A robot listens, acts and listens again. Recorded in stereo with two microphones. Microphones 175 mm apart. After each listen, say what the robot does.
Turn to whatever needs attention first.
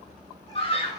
Turn 35° left.
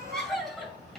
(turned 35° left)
Facing the scream, 2 to 4 m away.